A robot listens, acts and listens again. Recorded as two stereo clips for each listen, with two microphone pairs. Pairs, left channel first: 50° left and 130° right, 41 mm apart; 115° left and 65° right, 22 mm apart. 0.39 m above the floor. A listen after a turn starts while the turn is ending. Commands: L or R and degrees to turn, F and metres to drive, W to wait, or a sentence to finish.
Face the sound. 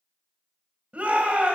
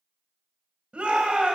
R80
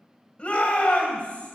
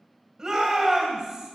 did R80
Found it: a shout, straight ahead.